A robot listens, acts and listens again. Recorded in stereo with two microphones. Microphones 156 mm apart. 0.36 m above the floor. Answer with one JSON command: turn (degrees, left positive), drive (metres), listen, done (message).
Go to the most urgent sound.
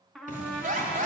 {"turn": -55}
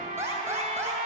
{"turn": -20}
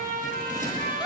{"listen": true}
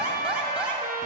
{"drive": 1.0}
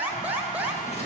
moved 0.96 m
{"turn": -15}
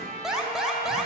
{"drive": 1.0}
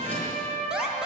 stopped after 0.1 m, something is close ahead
{"done": "Arrived at the alarm, straight ahead."}